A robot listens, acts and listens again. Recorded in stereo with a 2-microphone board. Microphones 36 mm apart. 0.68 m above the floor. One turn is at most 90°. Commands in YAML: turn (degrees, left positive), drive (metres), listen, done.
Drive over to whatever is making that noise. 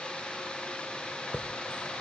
turn: 45
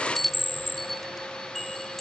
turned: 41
drive: 1.0
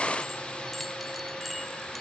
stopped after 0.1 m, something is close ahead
done: "Something is in my way. I am facing the chime but have not reached it."